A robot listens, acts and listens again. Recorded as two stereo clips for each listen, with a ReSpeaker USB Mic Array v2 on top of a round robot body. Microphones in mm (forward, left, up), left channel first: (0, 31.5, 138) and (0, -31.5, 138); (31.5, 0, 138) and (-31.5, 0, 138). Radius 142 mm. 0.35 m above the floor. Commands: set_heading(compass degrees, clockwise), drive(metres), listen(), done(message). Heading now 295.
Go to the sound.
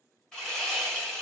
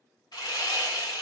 set_heading(285)
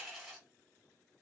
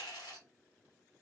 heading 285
drive(1.0)
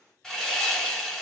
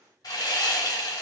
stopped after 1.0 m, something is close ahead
set_heading(275)
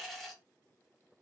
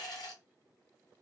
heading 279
done("Arrived at the sawing, straight ahead.")